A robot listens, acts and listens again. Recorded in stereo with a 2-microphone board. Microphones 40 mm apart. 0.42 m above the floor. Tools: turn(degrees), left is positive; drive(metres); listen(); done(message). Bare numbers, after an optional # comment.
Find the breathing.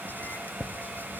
listen()
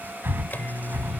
# The breathing: about 65° right or 115° right.
turn(-65)
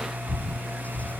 # So it is at 45° right.
turn(-45)
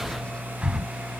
# The breathing is now 20° right.
turn(-20)
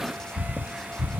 done("Found it: breathing, straight ahead.")